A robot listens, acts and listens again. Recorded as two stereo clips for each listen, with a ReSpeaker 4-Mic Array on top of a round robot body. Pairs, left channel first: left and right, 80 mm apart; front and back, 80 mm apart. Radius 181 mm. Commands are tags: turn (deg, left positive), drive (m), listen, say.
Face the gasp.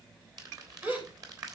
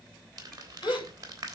<turn deg="-25"/>
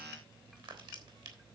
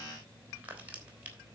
<say>I heard a gasp from this way, but can't make it out now.</say>